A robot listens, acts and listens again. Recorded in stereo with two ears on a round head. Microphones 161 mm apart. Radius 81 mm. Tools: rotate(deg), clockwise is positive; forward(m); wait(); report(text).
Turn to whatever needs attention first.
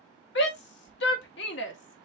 rotate(-70)
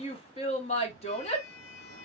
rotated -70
rotate(-35)
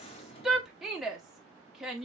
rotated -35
report("Found it: a shout, straight ahead.")